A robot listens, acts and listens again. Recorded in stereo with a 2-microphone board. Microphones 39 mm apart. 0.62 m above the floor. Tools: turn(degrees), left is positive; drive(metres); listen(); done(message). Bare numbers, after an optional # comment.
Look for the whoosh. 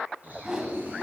# The whoosh: about 20° right or 160° right.
turn(-20)
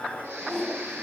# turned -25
done("Facing the whoosh.")